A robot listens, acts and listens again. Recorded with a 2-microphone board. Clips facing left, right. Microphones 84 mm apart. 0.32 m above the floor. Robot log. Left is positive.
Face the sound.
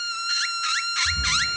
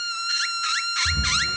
note: The snoring: about 40° right or 140° right.
cmd yaw -40
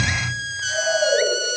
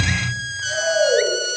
end: Facing the snoring, 2 to 4 m away.